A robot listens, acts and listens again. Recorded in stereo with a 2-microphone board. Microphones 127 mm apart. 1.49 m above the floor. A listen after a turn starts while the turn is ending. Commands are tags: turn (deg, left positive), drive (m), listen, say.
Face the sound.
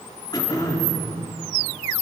<turn deg="30"/>
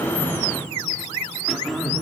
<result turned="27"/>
<say>Facing the throat clearing, 2 to 4 m away.</say>